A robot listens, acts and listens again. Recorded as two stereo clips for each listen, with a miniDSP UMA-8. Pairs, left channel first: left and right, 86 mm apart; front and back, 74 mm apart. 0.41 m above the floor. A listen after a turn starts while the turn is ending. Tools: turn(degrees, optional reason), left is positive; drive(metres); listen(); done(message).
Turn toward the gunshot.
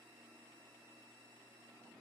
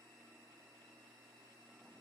listen()
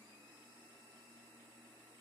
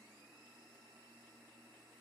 listen()
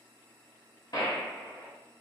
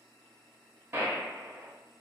turn(degrees=125, reason="The gunshot: 125° left.")
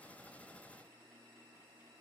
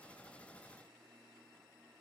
done("Facing where the gunshot came from. I can't hear it now.")